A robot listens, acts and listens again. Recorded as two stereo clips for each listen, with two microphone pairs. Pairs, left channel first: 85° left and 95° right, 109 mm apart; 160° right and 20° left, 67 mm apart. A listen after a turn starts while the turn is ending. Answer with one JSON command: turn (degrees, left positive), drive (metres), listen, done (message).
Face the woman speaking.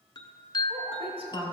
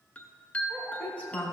{"turn": -90}
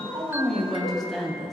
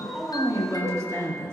{"done": "Facing the woman speaking."}